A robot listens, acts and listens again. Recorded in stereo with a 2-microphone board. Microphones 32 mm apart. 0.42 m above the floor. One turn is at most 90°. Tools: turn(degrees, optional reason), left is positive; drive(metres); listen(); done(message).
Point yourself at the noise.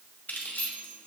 turn(degrees=60, reason="The keys jangling: about 60° left or 120° left.")
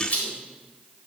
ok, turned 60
turn(degrees=55, reason="So it is at 55° left.")
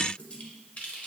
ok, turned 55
turn(degrees=45, reason="The keys jangling is now 45° left.")
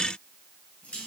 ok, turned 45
turn(degrees=45, reason="The keys jangling is now 45° left.")
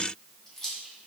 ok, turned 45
turn(degrees=10, reason="The keys jangling is now 10° left.")
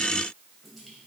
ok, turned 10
listen()
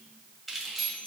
done("Facing the keys jangling.")